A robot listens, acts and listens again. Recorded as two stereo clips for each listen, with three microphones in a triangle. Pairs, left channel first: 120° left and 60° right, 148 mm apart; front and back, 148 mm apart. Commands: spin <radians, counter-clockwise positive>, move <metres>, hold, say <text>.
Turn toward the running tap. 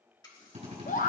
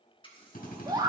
spin 1.05
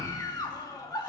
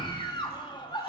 hold
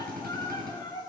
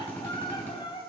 hold
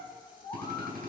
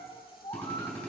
say I heard a running tap from this way, but can't make it out now.